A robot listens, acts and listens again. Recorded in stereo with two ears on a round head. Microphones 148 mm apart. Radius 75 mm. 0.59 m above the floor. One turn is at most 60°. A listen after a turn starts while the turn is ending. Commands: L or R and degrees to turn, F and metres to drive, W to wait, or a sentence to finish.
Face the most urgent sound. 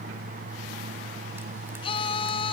L35
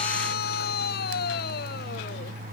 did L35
L60
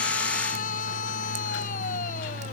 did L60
L50
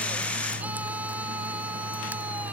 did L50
W
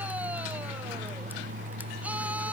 W
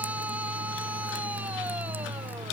R10
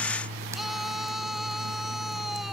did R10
Found it: a scream, straight ahead.